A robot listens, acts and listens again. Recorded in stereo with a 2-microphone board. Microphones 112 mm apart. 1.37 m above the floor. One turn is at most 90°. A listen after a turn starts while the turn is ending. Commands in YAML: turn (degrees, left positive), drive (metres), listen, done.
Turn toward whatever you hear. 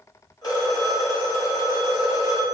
turn: 35
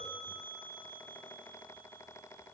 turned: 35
listen: true
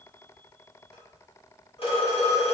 turn: 90
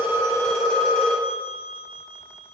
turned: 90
turn: 10
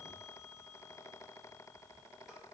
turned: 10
listen: true
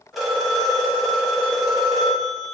done: "Found it: a phone ringing, straight ahead, 1 to 2 m away."